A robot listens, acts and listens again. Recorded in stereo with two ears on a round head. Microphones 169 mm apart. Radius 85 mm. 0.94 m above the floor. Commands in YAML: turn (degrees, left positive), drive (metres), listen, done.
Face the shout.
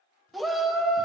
turn: 30
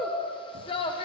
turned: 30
turn: 150
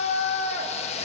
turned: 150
turn: 40
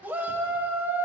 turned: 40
turn: -10
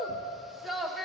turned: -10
done: "Facing the shout, 1 to 2 m away."